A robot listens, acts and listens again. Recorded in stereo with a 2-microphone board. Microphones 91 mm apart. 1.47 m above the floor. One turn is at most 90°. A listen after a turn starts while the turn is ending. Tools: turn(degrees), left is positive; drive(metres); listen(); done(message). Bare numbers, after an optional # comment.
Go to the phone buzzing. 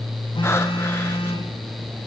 # The phone buzzing: about 70° left or 110° left.
turn(70)
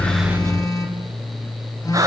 # So it is at 45° left.
turn(45)
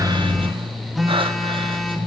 drive(1.0)
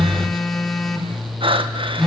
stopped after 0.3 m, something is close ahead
done("Something is in my way. I am facing the phone buzzing but have not reached it.")